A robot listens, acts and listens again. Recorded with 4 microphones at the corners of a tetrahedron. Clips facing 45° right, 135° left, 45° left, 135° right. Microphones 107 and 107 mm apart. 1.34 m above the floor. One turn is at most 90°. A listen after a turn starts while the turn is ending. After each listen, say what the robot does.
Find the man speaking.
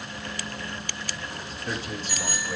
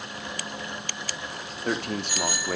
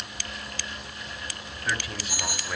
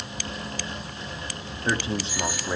Turn 90° left.
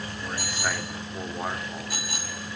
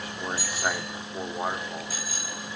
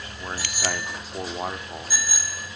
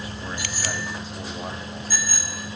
Turn 60° left.
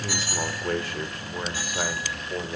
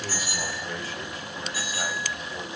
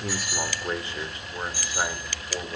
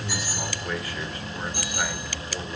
Turn 20° right.
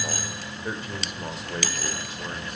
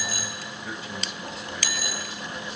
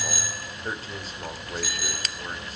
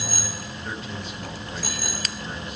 Found it: a man speaking, straight ahead.